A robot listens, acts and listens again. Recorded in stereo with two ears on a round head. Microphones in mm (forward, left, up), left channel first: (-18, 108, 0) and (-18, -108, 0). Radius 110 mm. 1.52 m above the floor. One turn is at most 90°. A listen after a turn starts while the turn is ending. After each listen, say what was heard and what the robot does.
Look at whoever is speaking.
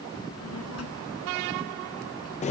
The child speaking: about 70° left or 110° left. Turn 70° left.
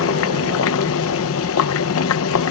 Keep listening.
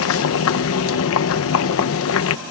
Keep listening.
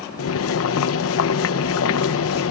I heard a child speaking, but can't make it out now. It was about straight ahead or 40° left.